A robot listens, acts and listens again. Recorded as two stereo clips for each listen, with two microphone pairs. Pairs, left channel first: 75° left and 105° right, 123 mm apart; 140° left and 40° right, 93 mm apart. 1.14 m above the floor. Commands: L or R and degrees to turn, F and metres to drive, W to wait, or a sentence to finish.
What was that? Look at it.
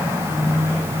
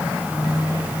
W
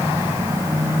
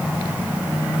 W
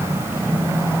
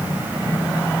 I can't make out anything to turn to.